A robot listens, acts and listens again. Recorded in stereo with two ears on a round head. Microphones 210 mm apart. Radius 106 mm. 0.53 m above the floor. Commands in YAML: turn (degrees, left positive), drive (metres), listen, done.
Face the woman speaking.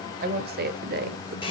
turn: -45
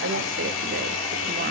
listen: true
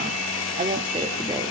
turn: -25
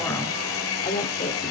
turn: 20
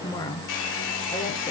turn: 15
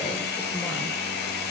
listen: true
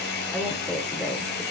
done: "Found it: a woman speaking, straight ahead."